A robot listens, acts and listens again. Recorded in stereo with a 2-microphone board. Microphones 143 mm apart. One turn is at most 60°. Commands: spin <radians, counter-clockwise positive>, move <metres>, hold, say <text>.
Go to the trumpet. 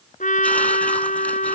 spin 1.05
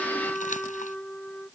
move 1.0
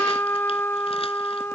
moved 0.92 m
spin 0.26
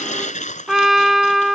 move 1.0
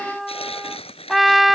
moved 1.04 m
move 1.0
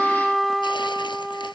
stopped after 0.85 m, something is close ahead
say I am next to the trumpet.